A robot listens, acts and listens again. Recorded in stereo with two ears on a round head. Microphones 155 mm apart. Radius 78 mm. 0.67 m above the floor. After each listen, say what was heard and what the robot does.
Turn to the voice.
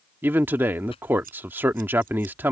Turn 30° right.
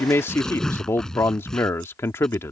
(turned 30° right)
So it is at 15° left. Turn 15° left.
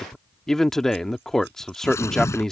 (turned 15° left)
Facing the man speaking.